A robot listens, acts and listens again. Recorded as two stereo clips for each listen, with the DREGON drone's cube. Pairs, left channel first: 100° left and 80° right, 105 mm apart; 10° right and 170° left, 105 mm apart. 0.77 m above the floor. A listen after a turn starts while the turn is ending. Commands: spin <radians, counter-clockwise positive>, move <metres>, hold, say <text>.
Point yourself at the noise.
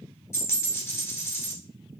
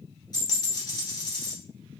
spin 0.61
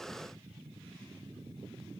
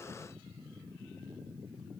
say Facing where the dropped coin came from. I can't hear it now.